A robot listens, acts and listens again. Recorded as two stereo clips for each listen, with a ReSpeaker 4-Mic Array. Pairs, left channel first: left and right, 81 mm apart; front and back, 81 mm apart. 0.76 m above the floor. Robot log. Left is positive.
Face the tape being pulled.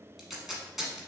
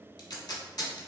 end: Facing the tape being pulled, 1 to 2 m away.